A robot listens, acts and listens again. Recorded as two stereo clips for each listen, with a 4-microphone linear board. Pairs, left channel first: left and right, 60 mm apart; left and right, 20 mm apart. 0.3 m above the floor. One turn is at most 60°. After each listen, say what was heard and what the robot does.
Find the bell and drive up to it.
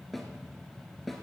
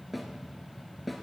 Keep listening.
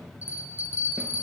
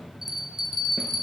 The bell: about 25° right or 155° right. Turn 25° right.
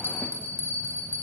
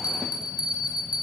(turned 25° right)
So it is at 125° right. Turn 60° right.
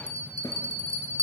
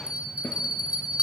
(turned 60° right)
The bell is now 70° right. Turn 60° right.
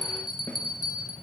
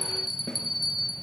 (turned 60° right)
The bell is now 10° right. Turn 10° right.
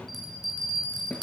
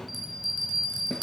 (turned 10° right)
Drive 1.0 m forward.
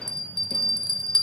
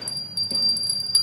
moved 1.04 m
The bell is now 10° left. Turn 10° left.
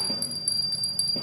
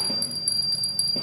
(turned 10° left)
Drive 1.0 m forward.
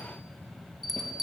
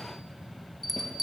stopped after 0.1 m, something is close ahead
I am next to the bell.